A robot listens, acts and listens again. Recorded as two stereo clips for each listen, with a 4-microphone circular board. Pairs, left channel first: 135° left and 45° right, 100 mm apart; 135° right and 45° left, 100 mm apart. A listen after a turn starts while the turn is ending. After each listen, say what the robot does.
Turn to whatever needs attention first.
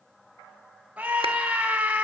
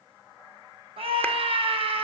Turn 30° left.
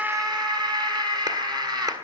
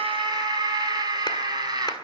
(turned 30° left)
Facing the scream, over 4 m away.